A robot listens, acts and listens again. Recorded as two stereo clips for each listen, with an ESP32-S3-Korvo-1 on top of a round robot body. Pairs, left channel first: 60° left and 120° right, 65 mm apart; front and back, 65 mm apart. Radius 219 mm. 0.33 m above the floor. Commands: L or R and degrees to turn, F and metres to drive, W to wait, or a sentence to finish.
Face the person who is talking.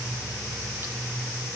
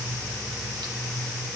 W
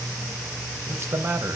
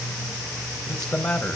R80
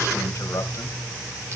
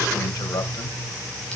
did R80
L20
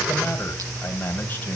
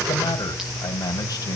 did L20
Found it: a man speaking, straight ahead.